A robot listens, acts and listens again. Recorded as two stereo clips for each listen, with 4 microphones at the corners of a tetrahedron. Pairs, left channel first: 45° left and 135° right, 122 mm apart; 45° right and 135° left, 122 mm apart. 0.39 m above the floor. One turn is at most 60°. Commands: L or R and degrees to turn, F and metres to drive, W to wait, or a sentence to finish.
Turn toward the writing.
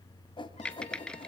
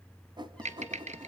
L60
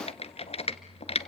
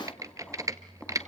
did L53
L35
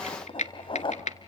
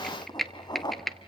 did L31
Facing the writing.